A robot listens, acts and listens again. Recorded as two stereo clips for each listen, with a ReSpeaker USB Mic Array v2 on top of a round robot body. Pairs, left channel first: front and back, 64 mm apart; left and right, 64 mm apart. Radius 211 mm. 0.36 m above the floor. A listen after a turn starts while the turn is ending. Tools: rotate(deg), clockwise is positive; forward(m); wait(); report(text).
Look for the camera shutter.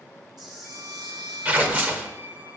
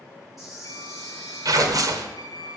rotate(-180)
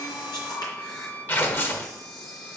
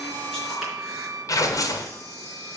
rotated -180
report("Found it: a camera shutter, straight ahead.")